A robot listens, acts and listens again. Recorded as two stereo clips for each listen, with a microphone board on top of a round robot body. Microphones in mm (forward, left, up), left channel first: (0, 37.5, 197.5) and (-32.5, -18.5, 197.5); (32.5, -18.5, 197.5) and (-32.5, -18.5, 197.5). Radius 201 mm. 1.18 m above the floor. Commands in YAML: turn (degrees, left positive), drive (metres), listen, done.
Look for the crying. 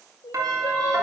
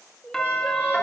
turn: 80
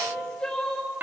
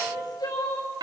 turn: -20
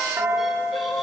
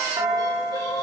listen: true
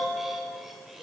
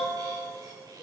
listen: true
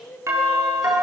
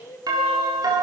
done: "Facing the crying, over 4 m away."